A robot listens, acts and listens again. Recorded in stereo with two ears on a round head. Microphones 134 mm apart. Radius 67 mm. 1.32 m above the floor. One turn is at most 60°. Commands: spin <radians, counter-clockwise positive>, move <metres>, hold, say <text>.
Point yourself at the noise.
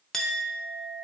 spin 0.52
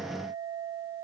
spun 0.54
spin -0.52
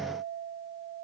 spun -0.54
say Found it: a clink, straight ahead.